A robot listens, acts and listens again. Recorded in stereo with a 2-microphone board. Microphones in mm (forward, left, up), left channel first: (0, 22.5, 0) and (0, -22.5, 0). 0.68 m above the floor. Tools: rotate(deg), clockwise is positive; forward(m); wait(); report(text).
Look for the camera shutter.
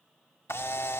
rotate(-70)
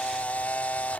rotate(-35)
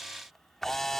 report("Found it: a camera shutter, straight ahead.")